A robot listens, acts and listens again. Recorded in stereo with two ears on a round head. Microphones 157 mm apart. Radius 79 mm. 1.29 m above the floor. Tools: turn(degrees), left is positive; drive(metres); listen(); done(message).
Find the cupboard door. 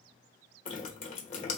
listen()
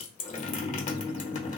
listen()
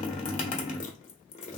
done("I can't make out a cupboard door to turn to.")